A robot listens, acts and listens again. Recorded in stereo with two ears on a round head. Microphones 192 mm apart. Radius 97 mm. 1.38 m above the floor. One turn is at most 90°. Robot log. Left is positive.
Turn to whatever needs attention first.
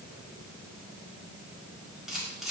cmd idle
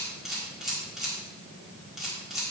cmd idle
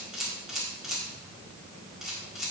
end: I can't make out anything urgent, only a camera shutter.